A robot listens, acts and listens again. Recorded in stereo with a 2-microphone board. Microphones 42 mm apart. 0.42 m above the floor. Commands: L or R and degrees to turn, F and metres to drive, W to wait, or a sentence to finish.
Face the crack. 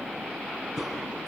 R30
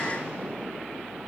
W
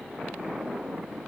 I heard a crack, but can't make it out now. It was about 20° left or 140° right.